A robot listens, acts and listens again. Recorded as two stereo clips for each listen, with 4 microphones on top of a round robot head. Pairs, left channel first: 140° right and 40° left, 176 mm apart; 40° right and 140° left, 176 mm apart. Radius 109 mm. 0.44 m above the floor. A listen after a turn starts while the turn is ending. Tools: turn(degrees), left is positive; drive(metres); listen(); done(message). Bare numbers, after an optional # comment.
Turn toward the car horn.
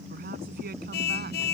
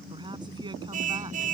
# The car horn: 175° right.
turn(-175)
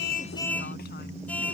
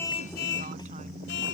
# The car horn is now 60° right.
turn(-60)
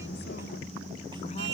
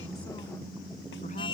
# The car horn is now 25° left.
turn(25)
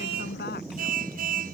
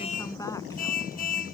done("Facing the car horn.")